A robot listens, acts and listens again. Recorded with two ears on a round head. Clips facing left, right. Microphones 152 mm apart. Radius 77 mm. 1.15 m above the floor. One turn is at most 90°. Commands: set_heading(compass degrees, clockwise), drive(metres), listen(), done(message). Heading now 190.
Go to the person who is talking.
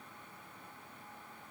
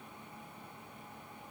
listen()
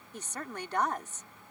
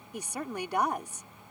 set_heading(220)
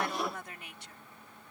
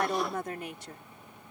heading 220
set_heading(310)
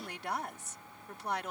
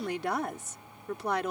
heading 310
set_heading(10)
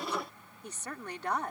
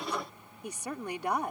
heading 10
set_heading(20)
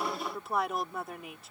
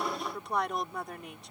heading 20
drive(1.0)
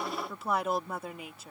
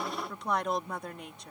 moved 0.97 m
drive(1.0)
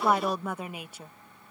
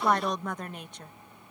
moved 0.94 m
set_heading(10)
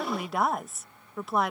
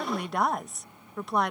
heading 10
drive(1.0)
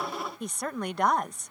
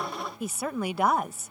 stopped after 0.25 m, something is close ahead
done("I am next to the woman speaking.")